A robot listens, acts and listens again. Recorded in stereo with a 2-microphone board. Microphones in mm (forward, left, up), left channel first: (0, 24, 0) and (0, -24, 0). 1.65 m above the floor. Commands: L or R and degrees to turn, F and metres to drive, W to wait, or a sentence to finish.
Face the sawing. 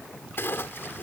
W
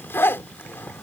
W
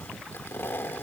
I can't make out sawing to turn to.